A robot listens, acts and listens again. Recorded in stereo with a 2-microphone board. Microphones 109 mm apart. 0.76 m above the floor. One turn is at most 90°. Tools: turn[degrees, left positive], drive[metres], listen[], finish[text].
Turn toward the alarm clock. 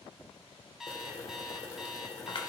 Action: turn[-30]
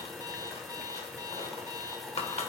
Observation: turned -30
Thought: So it is at 145° right.
Action: turn[-90]
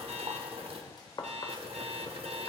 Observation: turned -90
Thought: The alarm clock is now 85° right.
Action: turn[-85]
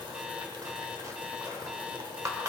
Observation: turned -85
Action: listen[]
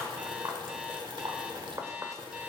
Thought: The alarm clock is now 10° right.
Action: turn[-10]
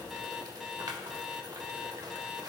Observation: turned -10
Action: finish[Found it: an alarm clock, straight ahead.]